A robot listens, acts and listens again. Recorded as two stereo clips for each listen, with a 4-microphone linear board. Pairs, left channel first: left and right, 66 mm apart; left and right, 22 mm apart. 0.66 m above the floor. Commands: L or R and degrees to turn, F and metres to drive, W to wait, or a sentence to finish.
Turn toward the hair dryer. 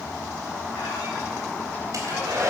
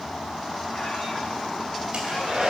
R55
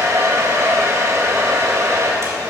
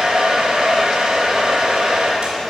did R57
R60
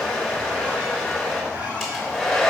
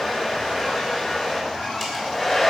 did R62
Found it: a hair dryer, straight ahead, 2 to 4 m away.